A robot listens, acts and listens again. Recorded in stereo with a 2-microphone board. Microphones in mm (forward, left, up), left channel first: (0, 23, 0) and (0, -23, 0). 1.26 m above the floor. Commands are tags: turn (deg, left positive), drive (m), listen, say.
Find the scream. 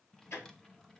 <listen/>
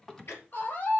<turn deg="45"/>
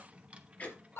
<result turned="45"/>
<turn deg="90"/>
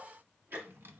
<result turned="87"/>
<listen/>
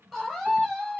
<say>Found it: a scream, straight ahead, over 4 m away.</say>